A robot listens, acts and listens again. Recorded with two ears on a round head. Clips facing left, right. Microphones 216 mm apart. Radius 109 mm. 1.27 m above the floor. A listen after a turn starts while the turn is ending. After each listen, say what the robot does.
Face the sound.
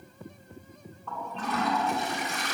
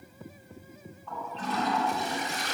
Turn 50° left.
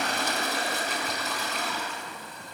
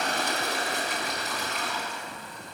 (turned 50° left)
Turn 80° left.
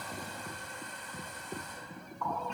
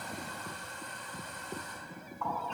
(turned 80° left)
Turn 10° left.
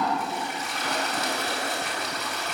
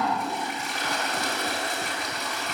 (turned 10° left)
Found it: a toilet flushing, straight ahead.